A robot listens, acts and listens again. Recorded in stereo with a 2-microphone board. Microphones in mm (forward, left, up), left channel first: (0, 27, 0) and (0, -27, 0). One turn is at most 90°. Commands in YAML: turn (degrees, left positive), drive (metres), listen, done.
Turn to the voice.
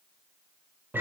listen: true
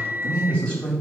turn: 20
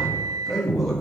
done: "Found it: a man speaking, straight ahead, 2 to 4 m away."